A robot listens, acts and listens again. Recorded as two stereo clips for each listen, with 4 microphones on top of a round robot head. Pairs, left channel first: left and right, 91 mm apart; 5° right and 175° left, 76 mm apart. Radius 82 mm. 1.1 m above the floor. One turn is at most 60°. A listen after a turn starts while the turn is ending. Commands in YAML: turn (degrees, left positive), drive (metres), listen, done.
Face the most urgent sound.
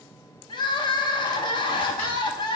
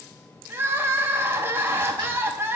turn: 60
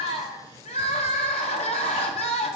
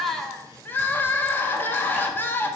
turn: 60
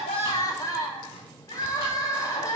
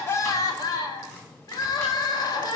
turn: 25
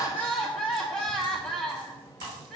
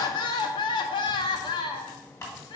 done: "Facing the crying, under 1 m away."